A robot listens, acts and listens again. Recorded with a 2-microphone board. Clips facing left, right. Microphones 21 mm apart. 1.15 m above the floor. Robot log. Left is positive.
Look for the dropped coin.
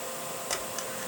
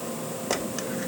cmd yaw -30
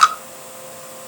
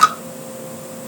note: So it is at 15° left.
cmd yaw +15
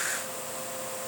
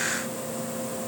end: I heard a dropped coin from this way, but can't make it out now.